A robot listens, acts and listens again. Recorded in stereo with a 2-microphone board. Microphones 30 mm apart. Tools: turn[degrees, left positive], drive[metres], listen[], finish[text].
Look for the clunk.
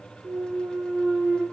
Action: turn[-90]
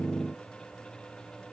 Action: finish[I heard a clunk from this way, but can't make it out now.]